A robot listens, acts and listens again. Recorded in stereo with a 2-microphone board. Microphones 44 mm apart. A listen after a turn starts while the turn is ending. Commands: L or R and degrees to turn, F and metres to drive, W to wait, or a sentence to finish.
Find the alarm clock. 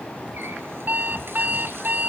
R45
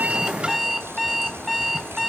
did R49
Facing the alarm clock.